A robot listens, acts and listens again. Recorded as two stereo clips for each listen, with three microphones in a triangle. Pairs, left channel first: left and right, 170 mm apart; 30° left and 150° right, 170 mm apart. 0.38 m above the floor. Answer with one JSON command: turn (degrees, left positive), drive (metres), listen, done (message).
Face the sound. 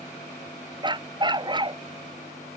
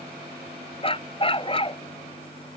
{"turn": -25}
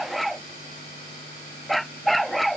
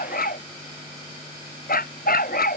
{"done": "Facing the dog barking."}